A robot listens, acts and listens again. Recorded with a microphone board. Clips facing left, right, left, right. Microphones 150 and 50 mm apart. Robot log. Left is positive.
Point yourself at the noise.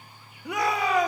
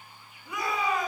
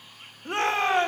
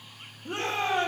note: The shout: about 75° left or 105° left.
cmd yaw +75
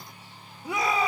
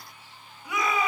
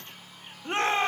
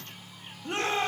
note: So it is at 30° left.
cmd yaw +30
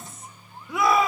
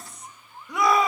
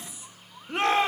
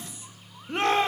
end: Found it: a shout, straight ahead, 2 to 4 m away.